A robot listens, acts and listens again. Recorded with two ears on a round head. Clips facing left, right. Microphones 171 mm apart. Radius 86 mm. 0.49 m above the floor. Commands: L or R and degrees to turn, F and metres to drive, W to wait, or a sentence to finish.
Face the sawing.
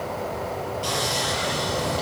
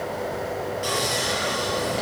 R20
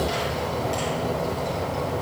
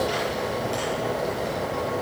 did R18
Facing the sawing.